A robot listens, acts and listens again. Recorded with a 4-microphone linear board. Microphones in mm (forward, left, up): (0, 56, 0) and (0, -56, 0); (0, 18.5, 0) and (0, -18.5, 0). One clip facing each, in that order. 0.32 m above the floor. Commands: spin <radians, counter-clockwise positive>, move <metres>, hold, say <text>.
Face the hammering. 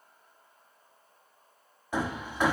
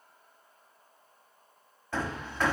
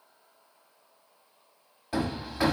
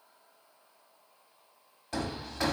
spin 0.52
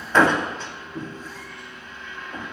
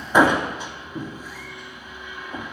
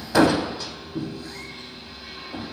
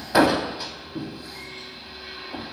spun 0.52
spin -0.26
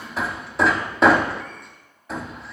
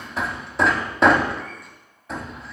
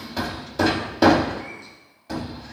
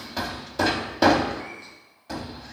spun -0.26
say Facing the hammering, under 1 m away.